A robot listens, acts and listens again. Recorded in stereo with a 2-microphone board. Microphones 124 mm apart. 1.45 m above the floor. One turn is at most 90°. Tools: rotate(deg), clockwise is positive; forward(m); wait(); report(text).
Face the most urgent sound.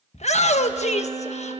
rotate(-65)
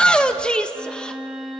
report("Facing the shout.")